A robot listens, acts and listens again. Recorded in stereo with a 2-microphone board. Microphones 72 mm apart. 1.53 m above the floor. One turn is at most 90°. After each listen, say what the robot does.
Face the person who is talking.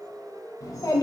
Turn 55° left.
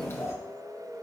Turn 45° left.
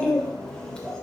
Turn 15° left.
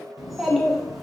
Facing the child speaking.